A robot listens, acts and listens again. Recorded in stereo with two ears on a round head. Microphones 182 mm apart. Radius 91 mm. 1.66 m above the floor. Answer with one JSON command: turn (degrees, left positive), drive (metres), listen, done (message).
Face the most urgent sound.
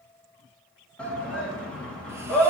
{"turn": 30}
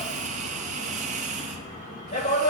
{"turn": 145}
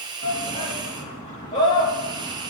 {"turn": 35}
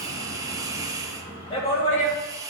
{"turn": 30}
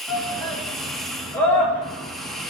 {"turn": 10}
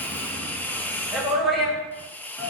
{"done": "Facing the shout, 2 to 4 m away."}